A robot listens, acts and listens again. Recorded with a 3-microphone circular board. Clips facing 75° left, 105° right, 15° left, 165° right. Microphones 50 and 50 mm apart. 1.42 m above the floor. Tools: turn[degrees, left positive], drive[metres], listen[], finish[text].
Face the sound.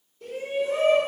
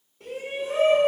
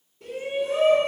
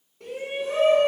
Thought: The shout: 140° right.
Action: turn[-140]
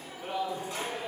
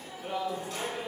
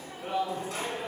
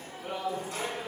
Action: finish[Facing the shout.]